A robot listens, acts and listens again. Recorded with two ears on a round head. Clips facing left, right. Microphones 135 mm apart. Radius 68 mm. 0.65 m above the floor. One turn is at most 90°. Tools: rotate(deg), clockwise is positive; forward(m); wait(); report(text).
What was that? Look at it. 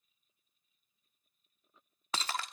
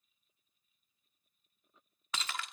rotate(-30)
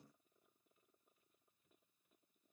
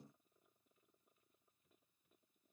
wait()
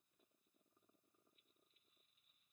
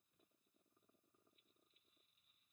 report("I heard breaking glass, but can't make it out now. It was about straight ahead or 120° left.")